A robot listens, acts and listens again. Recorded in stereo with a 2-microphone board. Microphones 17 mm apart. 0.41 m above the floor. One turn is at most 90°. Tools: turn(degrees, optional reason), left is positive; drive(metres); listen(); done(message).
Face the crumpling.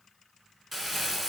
turn(degrees=-30)
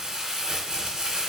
turn(degrees=-90, reason="So it is at 145° right.")
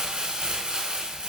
turn(degrees=-70, reason="The crumpling is now 70° right.")
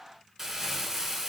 turn(degrees=-15, reason="The crumpling is now 15° right.")
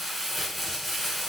done("Found it: crumpling, straight ahead, under 1 m away.")